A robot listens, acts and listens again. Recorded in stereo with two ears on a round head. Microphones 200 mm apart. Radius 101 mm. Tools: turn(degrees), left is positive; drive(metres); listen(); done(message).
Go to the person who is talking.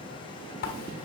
listen()
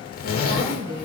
turn(degrees=-55)
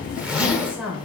drive(metres=1.0)
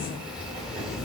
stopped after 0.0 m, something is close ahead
listen()
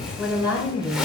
turn(degrees=-10)
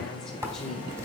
listen()
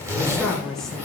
done("Something is in my way. I am facing the woman speaking but have not reached it.")